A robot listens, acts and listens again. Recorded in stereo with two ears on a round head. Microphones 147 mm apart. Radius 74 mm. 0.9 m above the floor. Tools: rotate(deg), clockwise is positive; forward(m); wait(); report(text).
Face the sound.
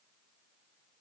wait()
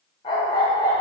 rotate(-20)
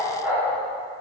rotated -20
rotate(10)
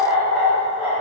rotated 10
rotate(10)
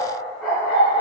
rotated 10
report("Found it: a dog barking, straight ahead, over 4 m away.")